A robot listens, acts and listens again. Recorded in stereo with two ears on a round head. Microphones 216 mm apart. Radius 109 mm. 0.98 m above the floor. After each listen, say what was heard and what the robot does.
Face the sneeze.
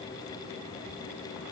Keep listening.
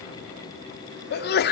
The sneeze: about 45° left or 135° left. Turn 45° left.
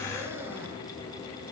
Keep listening.
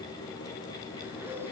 I heard a sneeze, but can't make it out now. It was about straight ahead or 90° left.